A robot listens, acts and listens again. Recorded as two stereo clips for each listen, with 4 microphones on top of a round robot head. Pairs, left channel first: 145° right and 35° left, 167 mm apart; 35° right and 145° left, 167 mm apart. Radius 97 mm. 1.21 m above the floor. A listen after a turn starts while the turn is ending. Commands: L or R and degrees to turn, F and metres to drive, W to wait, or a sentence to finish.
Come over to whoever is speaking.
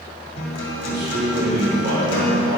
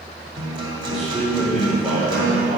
L55
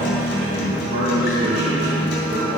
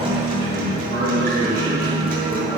W
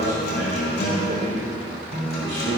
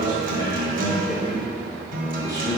W
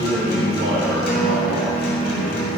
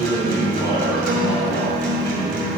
L30
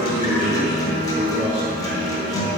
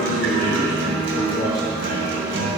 W
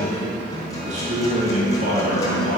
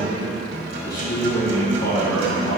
R10
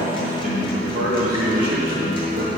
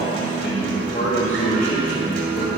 F1.0
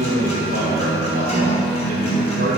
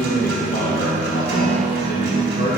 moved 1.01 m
F1.0
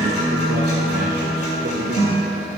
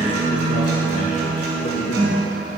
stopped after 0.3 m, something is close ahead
W
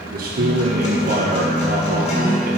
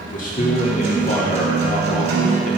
I am next to the man speaking.